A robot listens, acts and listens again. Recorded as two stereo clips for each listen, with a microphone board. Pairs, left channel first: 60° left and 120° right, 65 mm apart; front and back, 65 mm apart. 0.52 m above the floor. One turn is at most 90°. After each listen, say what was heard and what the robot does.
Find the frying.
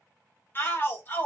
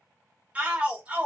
Keep listening.
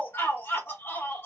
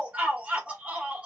Keep listening.
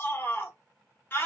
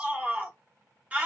I can't make out frying, only a shout.